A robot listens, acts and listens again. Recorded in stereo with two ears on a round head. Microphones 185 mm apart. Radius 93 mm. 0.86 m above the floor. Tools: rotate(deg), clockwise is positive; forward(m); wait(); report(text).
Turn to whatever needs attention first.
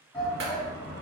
rotate(-20)
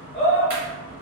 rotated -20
rotate(-135)
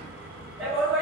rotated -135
report("Facing the shout, 1 to 2 m away.")